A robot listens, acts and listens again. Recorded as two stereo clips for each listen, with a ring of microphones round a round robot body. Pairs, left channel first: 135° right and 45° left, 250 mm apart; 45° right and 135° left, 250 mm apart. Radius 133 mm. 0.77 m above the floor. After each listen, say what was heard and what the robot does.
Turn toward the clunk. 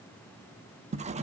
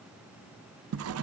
Keep listening.
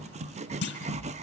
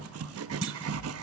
The clunk: 175° left. Turn 175° left.
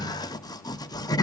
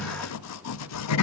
Facing where the clunk came from. I can't hear it now.